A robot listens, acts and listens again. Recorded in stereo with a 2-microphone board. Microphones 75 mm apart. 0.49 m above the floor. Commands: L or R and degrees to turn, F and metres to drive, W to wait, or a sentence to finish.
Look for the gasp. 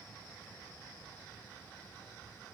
W
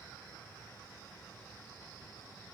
W
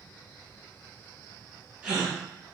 R30
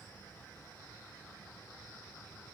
W
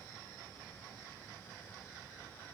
I heard a gasp, but can't make it out now. It was about 15° left or 135° right.